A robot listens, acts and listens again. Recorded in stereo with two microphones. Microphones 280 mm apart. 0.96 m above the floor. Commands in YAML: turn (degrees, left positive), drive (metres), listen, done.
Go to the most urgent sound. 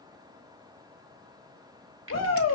turn: 65
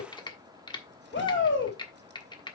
turn: 45
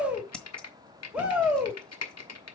drive: 1.0
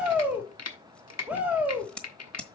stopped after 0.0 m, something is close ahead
done: "Blocked. The shout is further on, straight ahead."